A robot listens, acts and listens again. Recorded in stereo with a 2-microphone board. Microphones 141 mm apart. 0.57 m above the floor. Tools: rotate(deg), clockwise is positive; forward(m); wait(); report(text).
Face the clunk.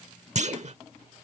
rotate(55)
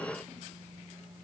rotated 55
wait()
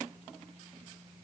report("I heard a clunk, but can't make it out now. It was about straight ahead or 70° right.")